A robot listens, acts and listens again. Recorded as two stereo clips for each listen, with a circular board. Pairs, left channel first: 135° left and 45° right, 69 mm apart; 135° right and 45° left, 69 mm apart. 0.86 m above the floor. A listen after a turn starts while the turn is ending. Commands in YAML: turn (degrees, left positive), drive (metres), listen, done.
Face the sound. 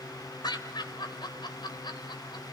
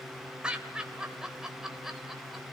turn: 130
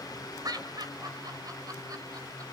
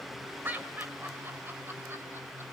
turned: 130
turn: -20
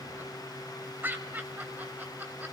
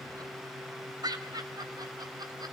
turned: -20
turn: 20
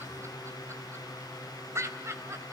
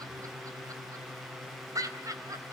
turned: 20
done: "Found it: laughter, straight ahead, 2 to 4 m away."